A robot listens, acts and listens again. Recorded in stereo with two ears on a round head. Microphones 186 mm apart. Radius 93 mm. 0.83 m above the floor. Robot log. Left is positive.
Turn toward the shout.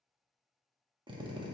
cmd idle
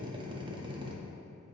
cmd idle
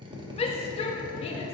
note: The shout: about 30° left or 150° left.
cmd yaw +30
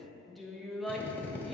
end: Found it: a shout, straight ahead, under 1 m away.